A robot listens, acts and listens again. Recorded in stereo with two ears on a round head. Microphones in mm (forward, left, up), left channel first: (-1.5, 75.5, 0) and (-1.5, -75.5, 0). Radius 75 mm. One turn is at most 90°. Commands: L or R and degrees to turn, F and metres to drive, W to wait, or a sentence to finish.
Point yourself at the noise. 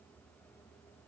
W
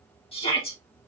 L35
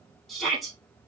Facing the shout, 2 to 4 m away.